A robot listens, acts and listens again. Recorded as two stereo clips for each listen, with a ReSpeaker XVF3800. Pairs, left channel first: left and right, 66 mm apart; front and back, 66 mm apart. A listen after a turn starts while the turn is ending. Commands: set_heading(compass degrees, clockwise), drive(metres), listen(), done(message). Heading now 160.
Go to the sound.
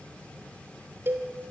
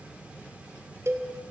set_heading(300)
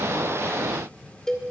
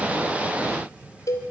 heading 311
set_heading(301)
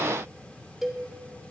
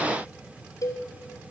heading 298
drive(1.0)
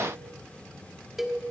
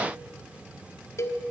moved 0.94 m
drive(1.0)
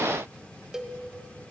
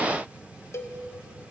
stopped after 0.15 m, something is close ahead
set_heading(308)
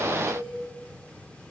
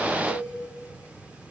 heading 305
done("I am next to the cowbell.")